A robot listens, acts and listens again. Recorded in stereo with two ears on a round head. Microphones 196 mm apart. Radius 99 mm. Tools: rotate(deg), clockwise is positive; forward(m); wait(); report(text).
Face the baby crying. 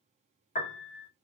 wait()
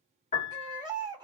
rotate(15)
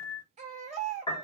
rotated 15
rotate(150)
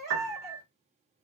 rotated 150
rotate(30)
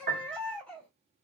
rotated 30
report("Facing the baby crying, 1 to 2 m away.")